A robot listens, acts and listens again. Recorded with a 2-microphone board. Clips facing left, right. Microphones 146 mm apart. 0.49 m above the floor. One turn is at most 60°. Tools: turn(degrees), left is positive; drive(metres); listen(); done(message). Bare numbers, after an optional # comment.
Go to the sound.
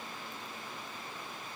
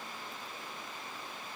listen()
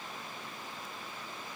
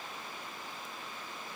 listen()
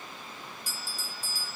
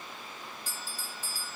turn(30)
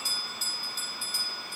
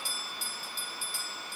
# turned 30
# So it is at 135° left.
turn(60)
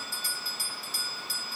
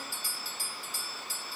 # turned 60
# The bell is now 75° left.
turn(60)
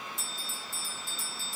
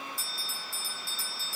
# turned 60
# The bell is now 20° left.
turn(20)
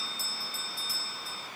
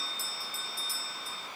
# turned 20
drive(1.0)
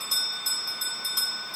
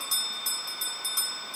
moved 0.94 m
drive(1.0)
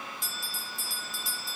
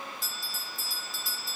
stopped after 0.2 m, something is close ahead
done("Arrived at the bell, straight ahead.")